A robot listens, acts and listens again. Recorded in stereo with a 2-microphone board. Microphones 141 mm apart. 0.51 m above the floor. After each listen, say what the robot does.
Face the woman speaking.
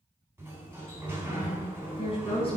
Turn 40° left.
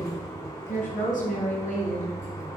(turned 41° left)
Turn 110° left.
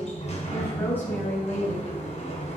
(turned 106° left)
Turn 15° left.
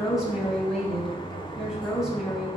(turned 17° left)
Facing the woman speaking.